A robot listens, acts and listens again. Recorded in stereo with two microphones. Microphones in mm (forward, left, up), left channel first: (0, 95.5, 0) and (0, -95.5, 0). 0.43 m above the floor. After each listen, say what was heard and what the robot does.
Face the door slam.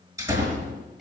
The door slam: about 15° right or 165° right. Turn 15° right.
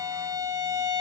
Keep listening.
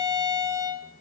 I heard a door slam, but can't make it out now. It was about straight ahead or 150° right.